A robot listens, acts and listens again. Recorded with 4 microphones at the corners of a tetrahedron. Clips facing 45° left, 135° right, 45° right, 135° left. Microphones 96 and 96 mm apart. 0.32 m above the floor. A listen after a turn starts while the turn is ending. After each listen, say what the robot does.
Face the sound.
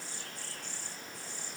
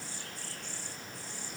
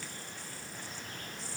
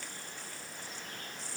Keep listening.
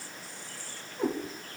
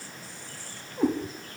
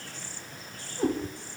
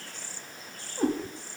Turn 180° left.
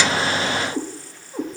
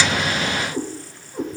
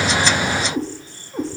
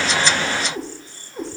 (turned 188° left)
Turn 10° right.
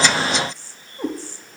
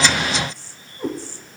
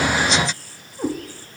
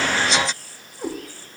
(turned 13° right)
Found it: a cat meowing, straight ahead, over 4 m away.